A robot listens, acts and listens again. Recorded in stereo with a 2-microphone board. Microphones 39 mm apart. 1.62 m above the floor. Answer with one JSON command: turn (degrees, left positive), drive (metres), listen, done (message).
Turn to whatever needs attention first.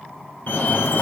{"turn": 55}
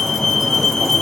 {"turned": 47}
{"turn": 15}
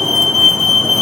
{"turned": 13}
{"done": "Facing the fire alarm, 1 to 2 m away."}